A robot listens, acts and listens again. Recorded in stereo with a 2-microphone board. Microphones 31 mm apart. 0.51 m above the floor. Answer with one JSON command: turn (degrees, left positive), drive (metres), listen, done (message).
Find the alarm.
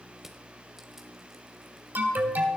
{"turn": -65}
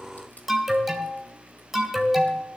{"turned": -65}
{"done": "Found it: an alarm, straight ahead, 2 to 4 m away."}